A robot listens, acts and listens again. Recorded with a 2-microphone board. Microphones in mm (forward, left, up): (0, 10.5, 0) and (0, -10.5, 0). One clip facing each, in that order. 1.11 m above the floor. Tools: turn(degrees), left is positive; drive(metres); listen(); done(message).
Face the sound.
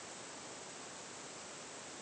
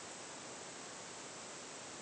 listen()
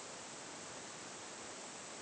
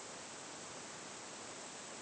listen()
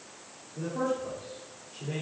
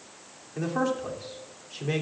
turn(degrees=-65)
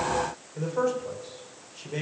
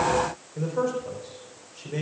done("Found it: a man speaking, straight ahead.")